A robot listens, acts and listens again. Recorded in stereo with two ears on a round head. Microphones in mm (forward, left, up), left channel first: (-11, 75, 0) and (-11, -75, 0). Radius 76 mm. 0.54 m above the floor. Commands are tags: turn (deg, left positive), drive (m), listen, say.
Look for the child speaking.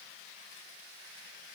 <listen/>
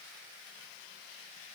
<listen/>
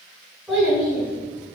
<turn deg="-30"/>
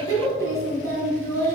<turn deg="15"/>
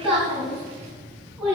<say>Found it: a child speaking, straight ahead, 2 to 4 m away.</say>